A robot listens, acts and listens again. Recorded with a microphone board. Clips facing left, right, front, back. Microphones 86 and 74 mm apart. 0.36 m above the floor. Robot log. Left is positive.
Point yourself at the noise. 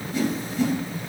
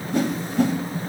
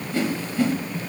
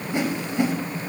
note: The whoosh: 115° right.
cmd yaw -115
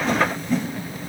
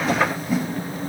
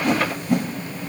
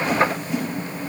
note: The whoosh is now 10° right.
cmd yaw -10
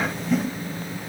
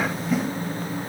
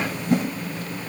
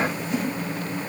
end: Facing the whoosh, 1 to 2 m away.